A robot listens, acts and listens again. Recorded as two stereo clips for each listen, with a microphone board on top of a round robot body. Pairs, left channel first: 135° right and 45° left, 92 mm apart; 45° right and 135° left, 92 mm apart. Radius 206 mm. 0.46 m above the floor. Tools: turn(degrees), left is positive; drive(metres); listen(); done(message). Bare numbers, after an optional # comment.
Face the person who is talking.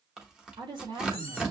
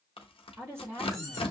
# The woman speaking: 75° left.
turn(75)
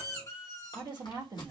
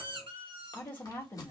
# The woman speaking is now 20° left.
turn(20)
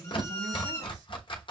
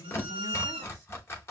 done("Facing the woman speaking.")